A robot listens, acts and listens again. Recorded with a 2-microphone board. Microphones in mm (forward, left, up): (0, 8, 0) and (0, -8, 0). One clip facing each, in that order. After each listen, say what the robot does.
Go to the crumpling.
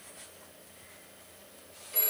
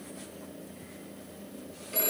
Keep listening.
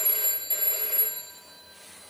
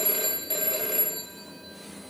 Keep listening.
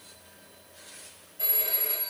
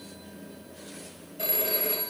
I can't make out crumpling to turn to.